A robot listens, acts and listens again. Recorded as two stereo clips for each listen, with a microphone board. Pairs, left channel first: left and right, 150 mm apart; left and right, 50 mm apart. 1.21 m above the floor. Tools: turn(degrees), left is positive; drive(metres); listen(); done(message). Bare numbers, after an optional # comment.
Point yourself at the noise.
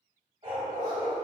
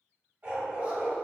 # The dog barking: about 30° right or 150° right.
turn(-30)
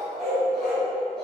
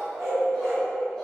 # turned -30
done("Facing the dog barking, 1 to 2 m away.")